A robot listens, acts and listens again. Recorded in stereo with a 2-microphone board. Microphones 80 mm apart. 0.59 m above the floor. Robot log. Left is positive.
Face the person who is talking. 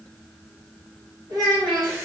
note: The child speaking: about 70° right or 110° right.
cmd yaw -70
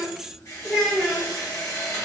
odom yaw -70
end: Facing the child speaking.